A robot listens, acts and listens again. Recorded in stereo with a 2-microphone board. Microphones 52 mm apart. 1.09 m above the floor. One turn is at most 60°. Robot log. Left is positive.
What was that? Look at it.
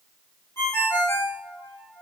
cmd yaw +60
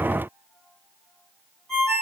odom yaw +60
note: So it is at 15° left.
cmd yaw +15
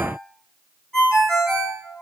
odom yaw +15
end: Found it: a ringtone, straight ahead, 2 to 4 m away.